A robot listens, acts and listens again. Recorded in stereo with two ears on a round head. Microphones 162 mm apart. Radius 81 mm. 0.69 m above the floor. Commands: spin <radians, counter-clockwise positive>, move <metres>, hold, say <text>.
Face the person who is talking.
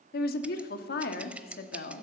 spin 0.96
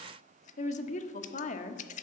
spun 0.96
spin 0.87
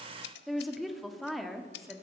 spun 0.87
say Found it: a woman speaking, straight ahead.